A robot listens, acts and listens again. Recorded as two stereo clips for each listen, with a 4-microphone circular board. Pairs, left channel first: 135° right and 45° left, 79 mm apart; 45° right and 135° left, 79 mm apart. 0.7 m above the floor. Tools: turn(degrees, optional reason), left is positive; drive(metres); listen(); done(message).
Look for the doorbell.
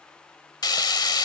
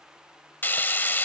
listen()
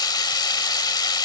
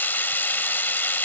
listen()
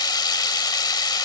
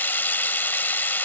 done("I can't make out a doorbell to turn to.")